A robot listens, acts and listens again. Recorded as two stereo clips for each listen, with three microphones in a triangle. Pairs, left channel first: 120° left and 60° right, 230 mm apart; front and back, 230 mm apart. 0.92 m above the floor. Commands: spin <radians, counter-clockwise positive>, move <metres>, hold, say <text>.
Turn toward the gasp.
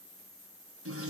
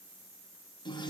hold
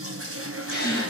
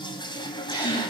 spin 1.22
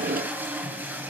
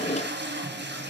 say Facing where the gasp came from. I can't hear it now.